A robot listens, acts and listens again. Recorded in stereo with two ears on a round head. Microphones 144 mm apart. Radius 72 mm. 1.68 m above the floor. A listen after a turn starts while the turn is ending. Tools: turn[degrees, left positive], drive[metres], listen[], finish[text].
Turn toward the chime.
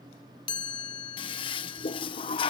Thought: The chime: about 30° left or 150° left.
Action: turn[30]
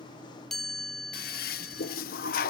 Action: finish[Facing the chime.]